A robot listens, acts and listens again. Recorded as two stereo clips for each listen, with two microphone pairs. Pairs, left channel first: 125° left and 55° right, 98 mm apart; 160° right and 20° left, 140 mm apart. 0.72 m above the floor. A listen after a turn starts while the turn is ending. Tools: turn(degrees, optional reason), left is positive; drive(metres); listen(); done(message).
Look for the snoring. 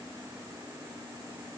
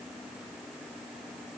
listen()
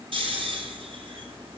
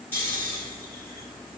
turn(degrees=-85, reason="The snoring: 85° right.")
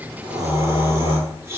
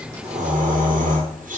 done("Found it: snoring, straight ahead.")